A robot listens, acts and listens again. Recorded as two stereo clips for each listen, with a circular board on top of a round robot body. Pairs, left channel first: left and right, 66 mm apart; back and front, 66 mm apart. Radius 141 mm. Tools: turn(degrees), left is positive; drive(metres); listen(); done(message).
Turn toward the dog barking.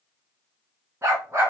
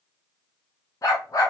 turn(degrees=-145)
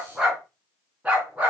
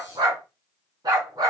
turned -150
turn(degrees=-20)
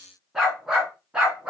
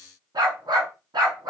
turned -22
turn(degrees=-15)
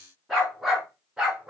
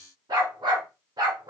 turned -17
turn(degrees=-10)
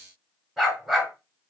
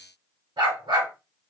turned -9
done("Found it: a dog barking, straight ahead, 2 to 4 m away.")